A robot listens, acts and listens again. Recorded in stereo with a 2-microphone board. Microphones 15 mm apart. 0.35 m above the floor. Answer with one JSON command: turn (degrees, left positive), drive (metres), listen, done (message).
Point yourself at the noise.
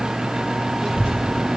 {"turn": -90}
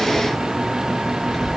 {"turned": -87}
{"done": "Facing the child speaking."}